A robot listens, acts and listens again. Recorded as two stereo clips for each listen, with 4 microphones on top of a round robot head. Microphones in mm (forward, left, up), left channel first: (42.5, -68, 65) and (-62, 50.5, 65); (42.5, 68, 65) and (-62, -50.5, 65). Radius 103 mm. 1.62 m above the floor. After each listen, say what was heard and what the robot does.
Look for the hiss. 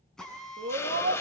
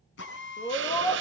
The hiss: 125° right. Turn 125° right.
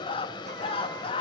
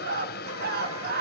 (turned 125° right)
The hiss is now 15° left. Turn 15° left.
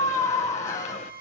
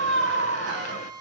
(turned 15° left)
Keep listening.
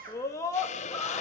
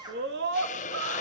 Found it: a hiss, straight ahead, under 1 m away.